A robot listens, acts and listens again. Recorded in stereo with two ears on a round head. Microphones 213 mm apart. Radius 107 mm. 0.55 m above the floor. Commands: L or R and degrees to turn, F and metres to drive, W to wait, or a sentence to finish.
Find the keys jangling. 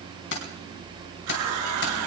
L50
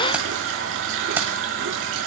W
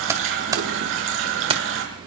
R25
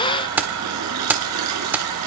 R10
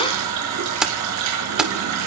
Found it: keys jangling, straight ahead, 1 to 2 m away.